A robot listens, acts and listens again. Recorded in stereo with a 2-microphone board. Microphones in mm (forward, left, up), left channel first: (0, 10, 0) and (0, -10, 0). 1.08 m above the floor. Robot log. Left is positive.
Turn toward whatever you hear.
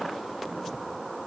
cmd idle
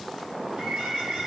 note: The bird: about 40° right or 140° right.
cmd yaw -40
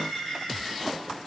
end: Facing the bird, over 4 m away.